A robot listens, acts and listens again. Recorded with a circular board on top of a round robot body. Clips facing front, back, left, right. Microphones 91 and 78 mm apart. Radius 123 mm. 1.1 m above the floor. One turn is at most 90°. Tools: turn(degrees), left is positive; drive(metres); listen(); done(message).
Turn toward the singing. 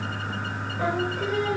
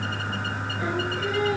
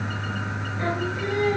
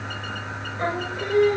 turn(degrees=-40)
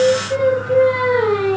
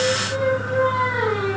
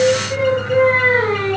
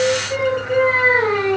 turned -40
turn(degrees=-10)
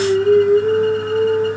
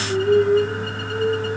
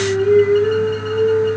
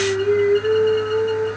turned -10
turn(degrees=-10)
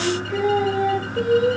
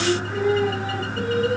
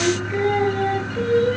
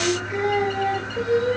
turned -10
turn(degrees=-15)
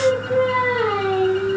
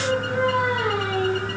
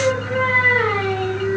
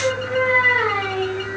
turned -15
done("Found it: singing, straight ahead, 2 to 4 m away.")